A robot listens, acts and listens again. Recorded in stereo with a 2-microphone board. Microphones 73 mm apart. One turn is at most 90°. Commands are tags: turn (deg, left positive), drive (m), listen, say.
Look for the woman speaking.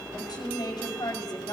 <turn deg="70"/>
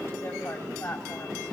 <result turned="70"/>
<turn deg="30"/>
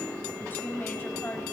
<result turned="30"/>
<turn deg="20"/>
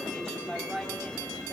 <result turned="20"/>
<say>Found it: a woman speaking, straight ahead.</say>